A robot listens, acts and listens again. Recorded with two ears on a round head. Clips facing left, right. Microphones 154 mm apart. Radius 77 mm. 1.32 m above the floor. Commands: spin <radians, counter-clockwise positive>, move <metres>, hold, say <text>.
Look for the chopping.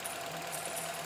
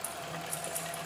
hold
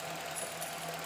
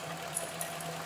hold
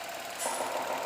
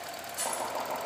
spin 0.52
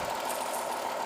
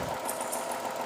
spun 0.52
spin -0.44
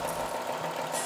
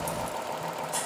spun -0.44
say Found it: chopping, straight ahead, over 4 m away.